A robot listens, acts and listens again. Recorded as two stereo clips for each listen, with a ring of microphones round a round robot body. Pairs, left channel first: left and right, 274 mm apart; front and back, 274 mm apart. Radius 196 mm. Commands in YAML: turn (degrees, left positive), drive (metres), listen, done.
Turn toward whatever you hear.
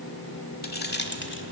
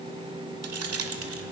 turn: 140
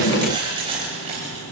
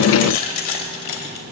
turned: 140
turn: -15
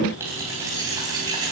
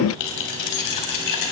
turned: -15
turn: -10
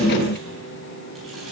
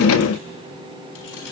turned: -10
listen: true
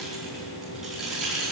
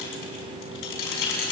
done: "Found it: keys jangling, straight ahead, over 4 m away."